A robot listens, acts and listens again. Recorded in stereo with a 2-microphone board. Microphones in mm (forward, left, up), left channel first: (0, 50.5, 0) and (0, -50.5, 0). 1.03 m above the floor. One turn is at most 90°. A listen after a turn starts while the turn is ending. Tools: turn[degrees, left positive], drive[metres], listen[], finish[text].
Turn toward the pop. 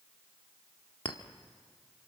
Action: listen[]
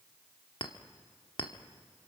Action: listen[]
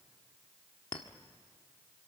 Action: finish[I can't make out a pop, only a clink.]